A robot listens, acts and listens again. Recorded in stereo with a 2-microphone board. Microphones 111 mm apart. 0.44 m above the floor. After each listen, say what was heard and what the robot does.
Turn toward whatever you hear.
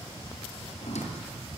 Turn 90° left.
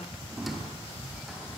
Facing the squeak.